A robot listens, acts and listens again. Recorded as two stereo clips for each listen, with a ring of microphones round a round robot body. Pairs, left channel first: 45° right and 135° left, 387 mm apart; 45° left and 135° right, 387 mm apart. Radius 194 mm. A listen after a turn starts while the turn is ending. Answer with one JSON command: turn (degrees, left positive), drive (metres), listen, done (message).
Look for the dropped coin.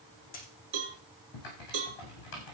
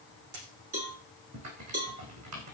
{"turn": -115}
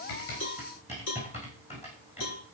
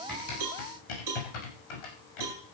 {"done": "Facing where the dropped coin came from. I can't hear it now."}